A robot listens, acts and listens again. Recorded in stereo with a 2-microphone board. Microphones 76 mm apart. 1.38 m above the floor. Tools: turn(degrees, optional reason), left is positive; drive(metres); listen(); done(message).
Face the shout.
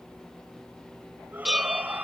turn(degrees=-25, reason="The shout: about 25° right or 155° right.")
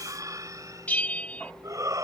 turn(degrees=-130, reason="So it is at 130° right.")
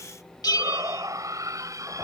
turn(degrees=-45, reason="The shout is now 45° right.")
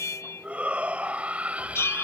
turn(degrees=-15, reason="The shout is now 15° right.")
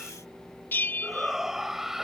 done("Facing the shout.")